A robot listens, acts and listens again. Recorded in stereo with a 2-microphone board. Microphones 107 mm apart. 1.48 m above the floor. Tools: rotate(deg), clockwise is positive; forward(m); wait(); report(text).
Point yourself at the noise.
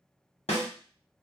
rotate(-70)
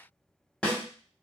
rotate(-10)
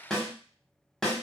report("Found it: a snare drum, straight ahead, 1 to 2 m away.")